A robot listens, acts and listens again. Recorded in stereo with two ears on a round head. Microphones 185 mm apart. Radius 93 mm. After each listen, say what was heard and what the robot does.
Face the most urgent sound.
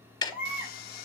Turn 30° right.
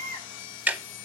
So it is at 20° left. Turn 20° left.
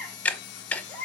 Facing the baby crying.